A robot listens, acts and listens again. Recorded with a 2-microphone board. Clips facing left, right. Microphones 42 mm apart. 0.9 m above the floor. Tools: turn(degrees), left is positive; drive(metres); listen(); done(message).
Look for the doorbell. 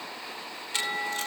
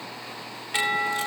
turn(degrees=-60)
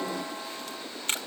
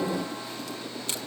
listen()
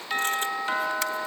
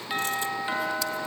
done("Facing the doorbell, 2 to 4 m away.")